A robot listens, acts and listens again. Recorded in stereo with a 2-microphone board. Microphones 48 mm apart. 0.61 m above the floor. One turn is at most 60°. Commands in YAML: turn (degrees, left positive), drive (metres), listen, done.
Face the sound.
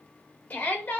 turn: 30
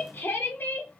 turn: 60
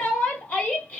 turn: 40
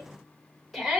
done: "Facing the shout."